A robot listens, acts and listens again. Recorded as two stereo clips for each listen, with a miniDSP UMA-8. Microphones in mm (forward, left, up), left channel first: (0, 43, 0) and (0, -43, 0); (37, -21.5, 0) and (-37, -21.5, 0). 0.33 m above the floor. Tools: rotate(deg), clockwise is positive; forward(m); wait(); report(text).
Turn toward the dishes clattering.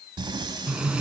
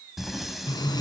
wait()
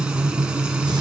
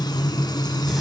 wait()
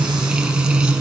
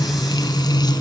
report("I can't make out dishes clattering to turn to.")